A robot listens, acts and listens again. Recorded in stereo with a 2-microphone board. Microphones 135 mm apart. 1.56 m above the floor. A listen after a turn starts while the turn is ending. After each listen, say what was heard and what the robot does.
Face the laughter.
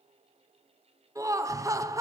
The laughter: about 25° right or 155° right. Turn 25° right.
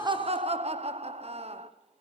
So it is at 130° right. Turn 130° right.
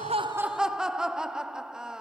Found it: laughter, straight ahead.